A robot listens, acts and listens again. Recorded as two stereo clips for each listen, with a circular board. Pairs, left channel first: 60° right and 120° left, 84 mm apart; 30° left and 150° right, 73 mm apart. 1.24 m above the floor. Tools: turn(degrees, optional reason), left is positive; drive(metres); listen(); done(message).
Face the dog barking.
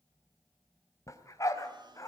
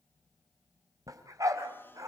turn(degrees=-110, reason="The dog barking: 110° right.")
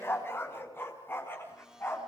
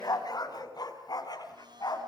done("Found it: a dog barking, straight ahead, over 4 m away.")